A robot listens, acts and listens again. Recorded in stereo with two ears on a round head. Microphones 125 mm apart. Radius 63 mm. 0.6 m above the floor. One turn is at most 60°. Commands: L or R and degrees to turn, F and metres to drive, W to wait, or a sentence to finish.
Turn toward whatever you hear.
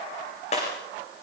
L40
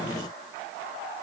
W
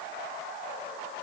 I heard breaking glass, but can't make it out now. It was about straight ahead or 100° left.